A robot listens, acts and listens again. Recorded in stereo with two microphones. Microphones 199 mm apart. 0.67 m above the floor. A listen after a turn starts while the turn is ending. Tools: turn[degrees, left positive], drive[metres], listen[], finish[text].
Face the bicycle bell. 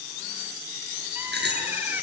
Thought: The bicycle bell: about 65° right or 115° right.
Action: turn[-65]
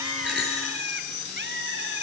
Action: listen[]
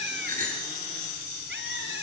Thought: So it is at 50° right.
Action: turn[-50]
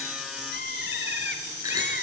Thought: The bicycle bell is now 20° right.
Action: turn[-20]
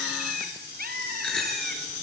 Action: finish[Found it: a bicycle bell, straight ahead.]